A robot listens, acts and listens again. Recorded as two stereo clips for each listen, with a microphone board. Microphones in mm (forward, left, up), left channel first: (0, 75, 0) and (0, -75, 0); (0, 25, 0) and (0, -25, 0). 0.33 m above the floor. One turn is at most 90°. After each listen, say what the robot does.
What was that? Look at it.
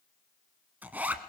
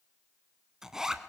Turn 30° right.
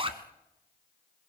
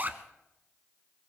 Turn 90° right.
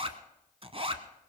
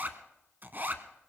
Turn 40° right.
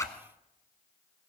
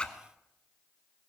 Turn 20° left.
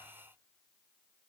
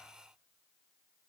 Keep listening.
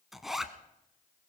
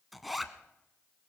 Facing the zipper, 1 to 2 m away.